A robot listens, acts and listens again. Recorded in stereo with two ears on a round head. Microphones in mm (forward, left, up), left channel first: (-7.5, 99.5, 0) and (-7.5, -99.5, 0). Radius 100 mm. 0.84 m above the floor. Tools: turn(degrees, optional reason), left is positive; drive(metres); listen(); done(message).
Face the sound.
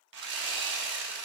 turn(degrees=-55, reason="The sawing: about 55° right or 125° right.")
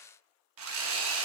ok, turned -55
turn(degrees=-65, reason="So it is at 65° right.")
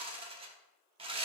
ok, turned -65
turn(degrees=-25, reason="The sawing is now 25° right.")
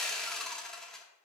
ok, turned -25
done("Found it: sawing, straight ahead, 1 to 2 m away.")